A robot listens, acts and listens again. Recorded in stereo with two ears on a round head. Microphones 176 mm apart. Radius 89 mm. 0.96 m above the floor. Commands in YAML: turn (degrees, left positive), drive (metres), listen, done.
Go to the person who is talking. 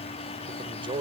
turn: -30
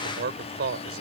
turn: -120
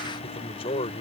turn: 30
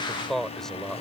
drive: 1.0
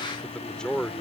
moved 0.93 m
drive: 1.0
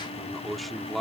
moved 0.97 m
drive: 1.0
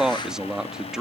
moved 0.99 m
drive: 1.0
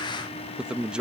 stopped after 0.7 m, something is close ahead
done: "Arrived at the man speaking, straight ahead."